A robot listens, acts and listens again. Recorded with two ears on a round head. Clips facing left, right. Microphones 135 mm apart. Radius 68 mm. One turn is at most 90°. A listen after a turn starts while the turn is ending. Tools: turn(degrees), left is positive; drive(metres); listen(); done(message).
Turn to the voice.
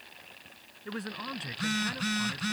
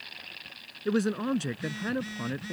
turn(degrees=-50)
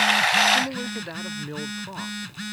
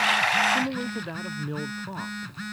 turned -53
done("Found it: a man speaking, straight ahead.")